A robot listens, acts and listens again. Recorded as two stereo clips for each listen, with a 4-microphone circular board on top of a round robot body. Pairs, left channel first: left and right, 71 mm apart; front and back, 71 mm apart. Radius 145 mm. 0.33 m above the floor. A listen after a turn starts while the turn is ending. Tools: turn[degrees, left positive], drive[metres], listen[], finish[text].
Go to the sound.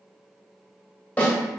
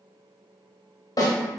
Thought: The snare drum: 20° left.
Action: turn[20]
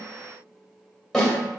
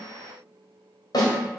Action: drive[1.0]
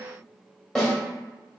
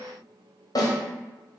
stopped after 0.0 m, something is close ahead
Action: finish[Blocked. The snare drum is further on, straight ahead.]